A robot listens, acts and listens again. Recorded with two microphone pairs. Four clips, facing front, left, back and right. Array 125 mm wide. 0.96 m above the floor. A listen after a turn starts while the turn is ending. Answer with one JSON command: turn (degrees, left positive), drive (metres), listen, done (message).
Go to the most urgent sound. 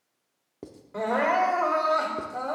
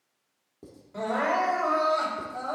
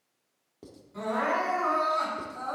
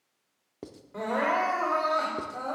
{"drive": 1.0}
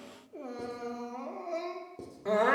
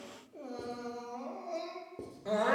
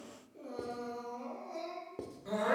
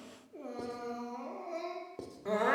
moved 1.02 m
{"drive": 1.0}
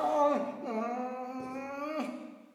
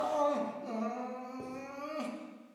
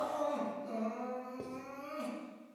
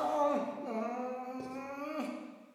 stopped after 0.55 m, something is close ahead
{"done": "Arrived at the crying, straight ahead."}